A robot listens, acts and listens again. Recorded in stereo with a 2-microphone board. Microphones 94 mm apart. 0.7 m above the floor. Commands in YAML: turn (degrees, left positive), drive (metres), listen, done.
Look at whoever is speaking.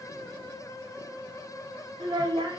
turn: -65
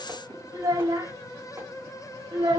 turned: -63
turn: -50
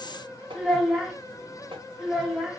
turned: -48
done: "Found it: a child speaking, straight ahead, under 1 m away."